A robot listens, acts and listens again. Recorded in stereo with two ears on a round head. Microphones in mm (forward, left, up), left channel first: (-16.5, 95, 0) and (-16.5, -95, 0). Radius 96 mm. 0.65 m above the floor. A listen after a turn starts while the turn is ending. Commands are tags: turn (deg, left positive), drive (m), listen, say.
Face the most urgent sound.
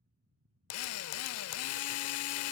<listen/>
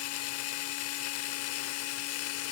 <listen/>
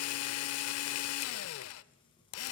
<say>I can't make out anything urgent to turn to.</say>